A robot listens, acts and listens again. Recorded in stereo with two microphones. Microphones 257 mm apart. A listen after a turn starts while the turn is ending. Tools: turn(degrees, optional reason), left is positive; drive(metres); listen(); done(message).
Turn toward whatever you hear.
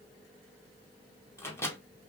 turn(degrees=30)
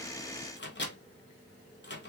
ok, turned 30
turn(degrees=135, reason="So it is at 135° left.")
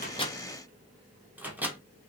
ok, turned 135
done("Found it: a microwave, straight ahead, under 1 m away.")